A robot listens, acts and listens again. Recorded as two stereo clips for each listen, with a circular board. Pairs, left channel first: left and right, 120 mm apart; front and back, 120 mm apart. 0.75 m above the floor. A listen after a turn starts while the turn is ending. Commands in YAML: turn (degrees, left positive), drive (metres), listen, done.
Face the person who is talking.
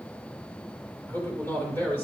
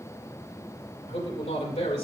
turn: 20
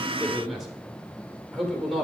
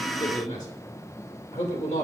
done: "Found it: a man speaking, straight ahead."